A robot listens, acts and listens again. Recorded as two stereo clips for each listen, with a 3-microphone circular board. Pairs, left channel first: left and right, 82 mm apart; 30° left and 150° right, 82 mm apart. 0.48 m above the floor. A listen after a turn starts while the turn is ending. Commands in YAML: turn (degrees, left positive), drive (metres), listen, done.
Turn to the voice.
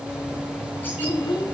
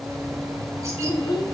turn: 65
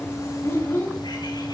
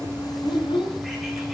turn: 30
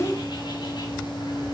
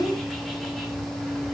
listen: true
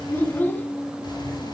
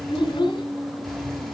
turn: 25
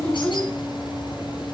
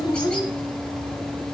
turn: 15
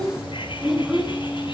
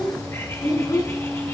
done: "Found it: a child speaking, straight ahead."